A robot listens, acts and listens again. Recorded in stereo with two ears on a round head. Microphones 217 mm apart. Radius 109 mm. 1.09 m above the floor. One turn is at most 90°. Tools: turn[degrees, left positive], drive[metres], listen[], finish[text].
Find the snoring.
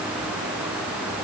Action: listen[]
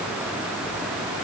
Action: listen[]
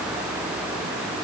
Action: finish[I can't make out snoring to turn to.]